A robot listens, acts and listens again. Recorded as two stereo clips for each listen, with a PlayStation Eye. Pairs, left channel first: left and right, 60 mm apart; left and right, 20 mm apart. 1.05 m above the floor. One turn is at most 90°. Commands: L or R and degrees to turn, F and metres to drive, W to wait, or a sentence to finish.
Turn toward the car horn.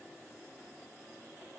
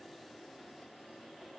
W
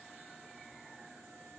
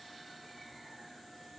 W
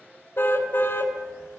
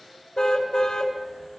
L40
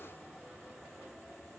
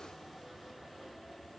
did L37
W
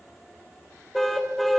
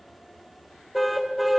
Facing the car horn, 2 to 4 m away.